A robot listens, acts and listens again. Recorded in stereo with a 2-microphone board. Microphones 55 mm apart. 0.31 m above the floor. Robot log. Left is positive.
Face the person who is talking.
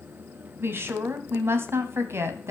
note: The woman speaking: about 50° right or 130° right.
cmd yaw -50
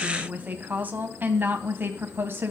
note: So it is at 45° right.
cmd yaw -45
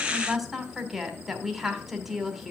end: Found it: a woman speaking, straight ahead.